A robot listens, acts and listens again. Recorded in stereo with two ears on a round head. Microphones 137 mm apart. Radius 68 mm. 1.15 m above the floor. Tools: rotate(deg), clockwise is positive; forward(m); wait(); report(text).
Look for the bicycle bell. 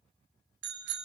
rotate(90)
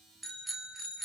report("Facing the bicycle bell.")